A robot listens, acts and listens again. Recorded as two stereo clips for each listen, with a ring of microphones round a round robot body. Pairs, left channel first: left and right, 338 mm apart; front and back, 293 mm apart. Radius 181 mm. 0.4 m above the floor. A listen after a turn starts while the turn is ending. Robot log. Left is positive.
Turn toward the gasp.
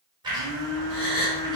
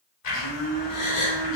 note: The gasp: 20° left.
cmd yaw +20
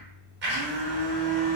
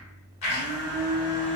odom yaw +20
end: I heard a gasp from this way, but can't make it out now.